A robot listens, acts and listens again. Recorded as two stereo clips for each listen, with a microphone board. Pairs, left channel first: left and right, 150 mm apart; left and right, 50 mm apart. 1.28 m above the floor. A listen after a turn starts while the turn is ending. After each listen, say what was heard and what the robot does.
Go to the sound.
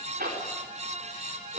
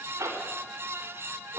The zipper: about 70° right or 110° right. Turn 70° right.
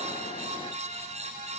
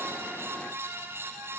Keep listening.
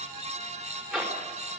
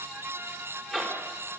Drive 1.0 m forward.
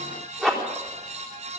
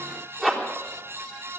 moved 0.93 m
Drive 1.0 m forward.
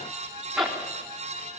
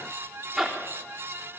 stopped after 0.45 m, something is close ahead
Blocked. The zipper is further on, straight ahead.